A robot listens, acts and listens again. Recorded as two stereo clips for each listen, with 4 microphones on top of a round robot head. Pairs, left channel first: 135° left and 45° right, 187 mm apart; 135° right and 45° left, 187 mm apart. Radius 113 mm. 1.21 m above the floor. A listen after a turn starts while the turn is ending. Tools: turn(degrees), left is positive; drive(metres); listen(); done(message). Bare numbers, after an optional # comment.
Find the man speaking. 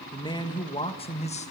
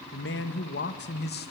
# The man speaking: 175° right.
turn(-175)
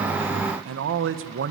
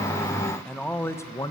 # The man speaking is now 65° right.
turn(-65)
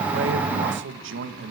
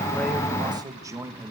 # The man speaking is now 35° right.
turn(-35)
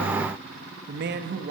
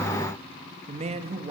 # The man speaking is now 15° right.
turn(-15)
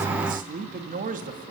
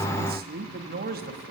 done("Found it: a man speaking, straight ahead, 2 to 4 m away.")